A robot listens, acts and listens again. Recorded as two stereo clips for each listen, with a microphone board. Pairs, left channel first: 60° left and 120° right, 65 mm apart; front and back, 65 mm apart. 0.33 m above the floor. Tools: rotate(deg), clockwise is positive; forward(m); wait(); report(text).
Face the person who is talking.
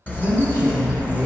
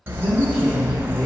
rotate(-90)
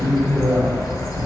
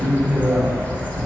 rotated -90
rotate(-35)
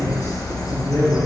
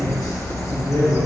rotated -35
rotate(-10)
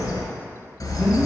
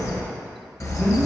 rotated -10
report("Found it: a man speaking, straight ahead, 2 to 4 m away.")